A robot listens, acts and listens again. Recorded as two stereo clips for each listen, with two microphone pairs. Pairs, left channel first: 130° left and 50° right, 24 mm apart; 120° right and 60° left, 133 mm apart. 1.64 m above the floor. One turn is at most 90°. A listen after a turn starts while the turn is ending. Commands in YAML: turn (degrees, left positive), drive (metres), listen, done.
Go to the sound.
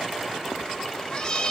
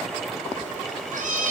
turn: 65
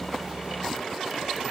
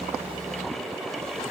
listen: true
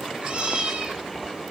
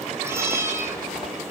turn: -10
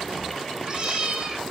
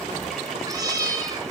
drive: 1.0
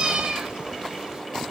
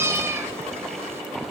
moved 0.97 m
turn: -10
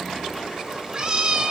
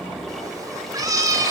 drive: 1.0
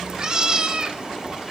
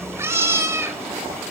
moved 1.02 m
drive: 1.0
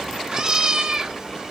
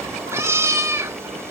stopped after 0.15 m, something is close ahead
done: "Arrived at the cat meowing, straight ahead."